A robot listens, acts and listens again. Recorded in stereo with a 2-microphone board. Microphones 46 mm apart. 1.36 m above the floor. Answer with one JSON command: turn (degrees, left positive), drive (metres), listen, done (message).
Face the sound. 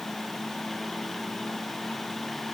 {"listen": true}
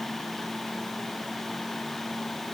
{"listen": true}
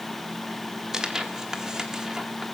{"turn": -30}
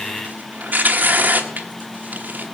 {"turn": -135}
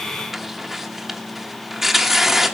{"done": "Found it: tearing paper, straight ahead."}